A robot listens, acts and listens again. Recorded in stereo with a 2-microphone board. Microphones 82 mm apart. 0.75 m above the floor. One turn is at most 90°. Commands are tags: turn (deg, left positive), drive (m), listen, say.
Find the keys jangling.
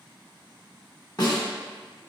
<listen/>
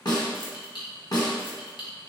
<turn deg="90"/>
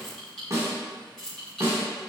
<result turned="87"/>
<say>Facing the keys jangling.</say>